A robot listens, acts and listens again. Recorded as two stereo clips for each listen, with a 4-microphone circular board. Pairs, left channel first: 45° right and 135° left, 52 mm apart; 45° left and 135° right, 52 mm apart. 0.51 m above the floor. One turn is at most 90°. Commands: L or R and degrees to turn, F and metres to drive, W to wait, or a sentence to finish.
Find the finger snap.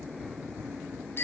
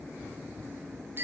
W
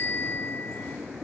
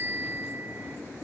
W
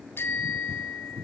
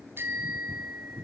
I can't make out a finger snap, only a bicycle bell.